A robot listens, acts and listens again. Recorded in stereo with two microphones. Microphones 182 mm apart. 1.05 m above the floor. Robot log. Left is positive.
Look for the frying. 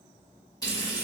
note: The frying: about 20° left or 160° left.
cmd yaw +20
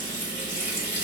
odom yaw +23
note: So it is at 140° left.
cmd yaw +140
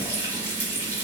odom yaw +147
note: The frying is now 10° right.
cmd yaw -10
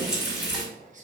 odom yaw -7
end: Facing the frying, 1 to 2 m away.